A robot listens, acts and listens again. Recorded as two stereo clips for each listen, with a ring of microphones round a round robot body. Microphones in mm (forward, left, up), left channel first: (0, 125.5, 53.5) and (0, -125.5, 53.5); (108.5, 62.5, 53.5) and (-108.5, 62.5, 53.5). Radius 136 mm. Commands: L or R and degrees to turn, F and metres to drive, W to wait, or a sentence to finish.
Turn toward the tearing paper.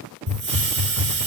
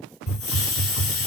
W
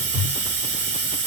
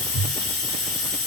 W
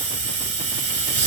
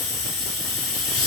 I can't make out tearing paper to turn to.